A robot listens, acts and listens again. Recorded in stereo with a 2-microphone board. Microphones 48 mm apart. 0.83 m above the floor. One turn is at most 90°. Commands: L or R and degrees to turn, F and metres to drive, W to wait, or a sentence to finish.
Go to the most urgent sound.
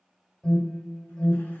L30
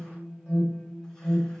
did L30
R25
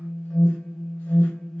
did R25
F1.0
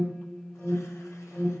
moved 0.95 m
L15
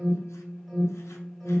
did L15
F1.0
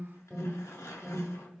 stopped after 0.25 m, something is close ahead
I am next to the alarm.